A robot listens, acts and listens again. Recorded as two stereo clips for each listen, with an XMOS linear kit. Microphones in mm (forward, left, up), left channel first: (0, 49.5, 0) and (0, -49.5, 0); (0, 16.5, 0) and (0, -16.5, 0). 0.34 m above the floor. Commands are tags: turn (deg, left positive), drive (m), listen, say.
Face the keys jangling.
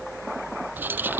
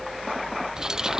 <turn deg="-20"/>
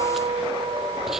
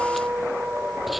<listen/>
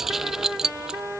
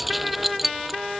<turn deg="-30"/>
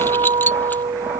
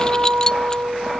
<listen/>
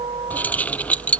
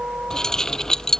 <turn deg="15"/>
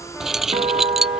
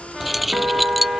<say>Facing the keys jangling.</say>